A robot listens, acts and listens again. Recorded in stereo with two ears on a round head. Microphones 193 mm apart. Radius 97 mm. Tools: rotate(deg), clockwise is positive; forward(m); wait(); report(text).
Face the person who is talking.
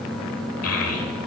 rotate(-90)
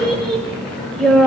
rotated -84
report("Found it: a child speaking, straight ahead, 1 to 2 m away.")